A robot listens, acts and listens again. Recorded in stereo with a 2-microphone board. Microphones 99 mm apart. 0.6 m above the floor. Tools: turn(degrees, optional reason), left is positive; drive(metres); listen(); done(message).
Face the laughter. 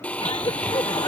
turn(degrees=60, reason="The laughter: about 60° left or 120° left.")
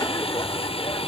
turn(degrees=40, reason="So it is at 40° left.")
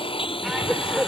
done("Facing the laughter.")